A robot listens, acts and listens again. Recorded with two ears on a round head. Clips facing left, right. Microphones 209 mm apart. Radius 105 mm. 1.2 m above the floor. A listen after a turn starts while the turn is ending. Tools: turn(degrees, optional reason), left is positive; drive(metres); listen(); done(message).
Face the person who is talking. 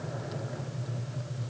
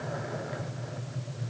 listen()
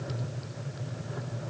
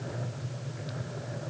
listen()
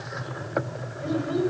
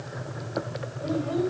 turn(degrees=30, reason="The child speaking: about 30° left or 150° left.")
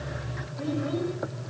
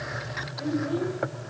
listen()
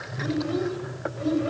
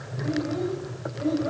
turn(degrees=135, reason="So it is at 135° left.")
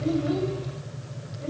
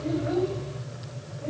listen()
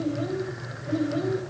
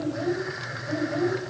turn(degrees=25, reason="The child speaking is now 25° left.")
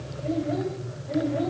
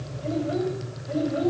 turn(degrees=-10, reason="The child speaking is now 10° right.")
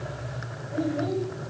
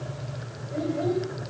done("Facing the child speaking.")